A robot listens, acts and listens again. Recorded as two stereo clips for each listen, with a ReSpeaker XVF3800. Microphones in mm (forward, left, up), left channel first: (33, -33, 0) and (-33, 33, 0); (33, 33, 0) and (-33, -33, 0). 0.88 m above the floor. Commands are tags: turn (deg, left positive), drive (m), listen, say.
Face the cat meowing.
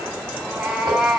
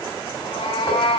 <turn deg="50"/>
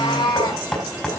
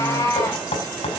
<turn deg="-15"/>
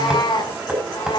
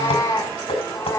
<turn deg="-15"/>
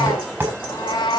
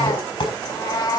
<say>Found it: a cat meowing, straight ahead, over 4 m away.</say>